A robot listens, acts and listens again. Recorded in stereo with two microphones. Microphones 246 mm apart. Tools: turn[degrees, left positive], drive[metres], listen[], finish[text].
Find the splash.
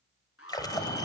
Thought: The splash: about 15° left or 165° left.
Action: turn[15]
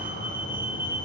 Action: listen[]
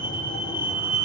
Action: finish[I heard a splash, but can't make it out now. It was about straight ahead or 150° left.]